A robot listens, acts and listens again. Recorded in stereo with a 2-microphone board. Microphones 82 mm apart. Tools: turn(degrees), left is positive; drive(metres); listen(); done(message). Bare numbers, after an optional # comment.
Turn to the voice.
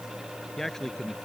turn(30)
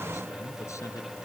listen()
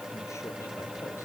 listen()
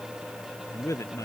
# So it is at 140° left.
turn(140)
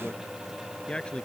# The man speaking is now 10° left.
turn(10)
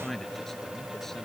done("Found it: a man speaking, straight ahead.")